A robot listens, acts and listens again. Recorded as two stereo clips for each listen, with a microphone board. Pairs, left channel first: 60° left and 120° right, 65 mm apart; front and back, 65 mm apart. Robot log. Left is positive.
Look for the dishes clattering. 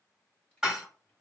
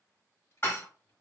note: The dishes clattering: 45° right.
cmd yaw -45
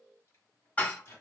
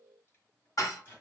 end: Found it: dishes clattering, straight ahead, under 1 m away.